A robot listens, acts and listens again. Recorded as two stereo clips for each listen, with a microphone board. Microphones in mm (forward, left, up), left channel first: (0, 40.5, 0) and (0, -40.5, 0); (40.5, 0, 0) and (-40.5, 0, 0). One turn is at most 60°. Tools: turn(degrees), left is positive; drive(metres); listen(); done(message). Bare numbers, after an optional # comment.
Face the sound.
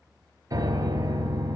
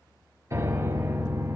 # The piano: 130° right.
turn(-60)
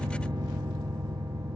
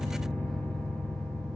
# The piano is now 70° right.
turn(-60)
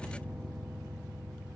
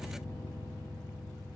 # The piano is now 10° right.
turn(-10)
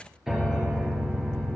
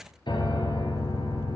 done("Facing the piano.")